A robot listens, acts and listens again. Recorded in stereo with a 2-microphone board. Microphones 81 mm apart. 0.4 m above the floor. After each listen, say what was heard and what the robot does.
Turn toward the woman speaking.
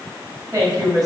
The woman speaking: about 50° right or 130° right. Turn 50° right.
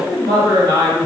So it is at 45° right. Turn 45° right.
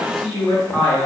The woman speaking is now 15° left. Turn 15° left.
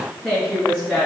The woman speaking is now 10° left. Turn 10° left.
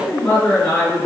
Facing the woman speaking.